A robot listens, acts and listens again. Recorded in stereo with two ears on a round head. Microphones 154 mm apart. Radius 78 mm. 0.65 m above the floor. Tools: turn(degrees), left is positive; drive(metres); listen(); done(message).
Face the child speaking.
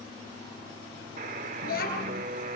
turn(degrees=60)
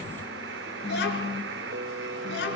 turn(degrees=70)
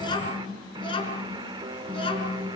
turn(degrees=30)
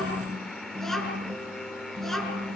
done("Found it: a child speaking, straight ahead.")